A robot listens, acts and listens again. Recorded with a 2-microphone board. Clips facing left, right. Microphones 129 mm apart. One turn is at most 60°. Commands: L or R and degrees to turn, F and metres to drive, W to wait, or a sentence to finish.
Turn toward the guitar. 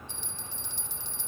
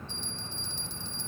W
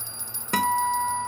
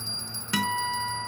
L45
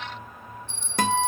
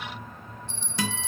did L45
L60
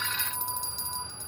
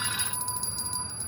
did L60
L10
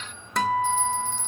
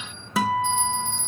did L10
Facing the guitar.